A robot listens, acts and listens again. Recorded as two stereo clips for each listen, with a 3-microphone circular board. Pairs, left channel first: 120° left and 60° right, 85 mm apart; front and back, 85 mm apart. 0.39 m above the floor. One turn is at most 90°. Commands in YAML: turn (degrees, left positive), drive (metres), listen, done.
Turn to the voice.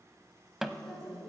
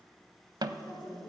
turn: 35
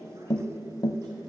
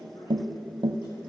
turn: -20
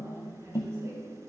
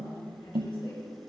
done: "Found it: a woman speaking, straight ahead."